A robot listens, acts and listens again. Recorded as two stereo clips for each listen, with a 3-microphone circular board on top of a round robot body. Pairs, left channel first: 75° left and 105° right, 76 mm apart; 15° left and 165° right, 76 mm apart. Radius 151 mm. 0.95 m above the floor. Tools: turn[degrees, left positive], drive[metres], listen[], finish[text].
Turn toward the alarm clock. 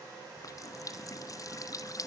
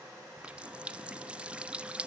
Action: listen[]
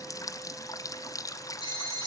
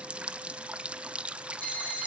Thought: The alarm clock: 85° left.
Action: turn[85]
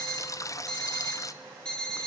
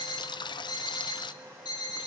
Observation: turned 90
Action: finish[Facing the alarm clock.]